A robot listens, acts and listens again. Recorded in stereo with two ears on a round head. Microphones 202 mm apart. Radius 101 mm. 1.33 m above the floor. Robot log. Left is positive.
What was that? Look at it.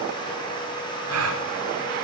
cmd yaw -90
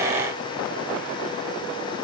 end: Facing where the gasp came from. I can't hear it now.